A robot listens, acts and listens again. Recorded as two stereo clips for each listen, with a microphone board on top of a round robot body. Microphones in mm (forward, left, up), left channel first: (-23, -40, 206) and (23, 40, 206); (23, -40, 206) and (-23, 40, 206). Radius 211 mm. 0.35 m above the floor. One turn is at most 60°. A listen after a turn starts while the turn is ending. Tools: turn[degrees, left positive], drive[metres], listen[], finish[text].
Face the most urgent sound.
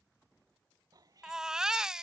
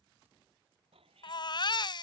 Thought: The baby crying: 20° right.
Action: turn[-20]
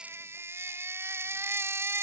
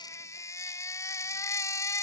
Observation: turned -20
Action: finish[Found it: a baby crying, straight ahead.]